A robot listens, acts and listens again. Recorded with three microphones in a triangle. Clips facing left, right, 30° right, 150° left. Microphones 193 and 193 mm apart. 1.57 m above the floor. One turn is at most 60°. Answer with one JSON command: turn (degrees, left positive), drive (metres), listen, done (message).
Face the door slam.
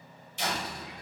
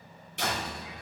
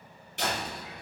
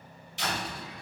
{"turn": -60}
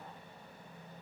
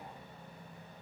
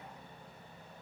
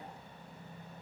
{"done": "I heard a door slam from this way, but can't make it out now."}